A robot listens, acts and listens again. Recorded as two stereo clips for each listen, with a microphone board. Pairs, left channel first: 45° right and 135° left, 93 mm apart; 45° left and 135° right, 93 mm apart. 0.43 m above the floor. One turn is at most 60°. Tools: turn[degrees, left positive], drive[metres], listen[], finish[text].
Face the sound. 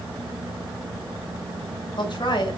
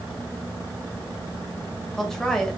Thought: The woman speaking: 35° right.
Action: turn[-35]
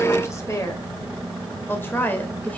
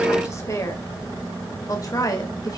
Thought: The woman speaking is now 20° left.
Action: turn[20]
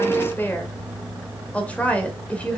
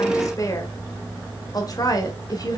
Thought: The woman speaking is now 25° left.
Action: turn[25]
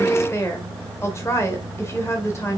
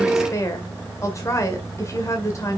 Action: finish[Found it: a woman speaking, straight ahead, 1 to 2 m away.]